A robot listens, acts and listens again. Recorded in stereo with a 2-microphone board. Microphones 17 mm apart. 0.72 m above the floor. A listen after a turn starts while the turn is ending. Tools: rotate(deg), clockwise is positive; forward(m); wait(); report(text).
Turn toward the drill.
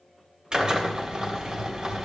rotate(35)
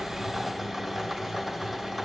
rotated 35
report("Facing the drill.")